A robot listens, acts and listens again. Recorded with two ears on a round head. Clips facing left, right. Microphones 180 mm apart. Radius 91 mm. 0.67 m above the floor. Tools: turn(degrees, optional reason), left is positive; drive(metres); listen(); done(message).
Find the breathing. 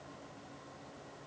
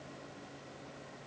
listen()
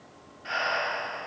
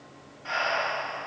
turn(degrees=20, reason="The breathing: about 20° left or 160° left.")
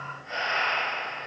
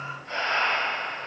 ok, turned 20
done("Found it: breathing, straight ahead.")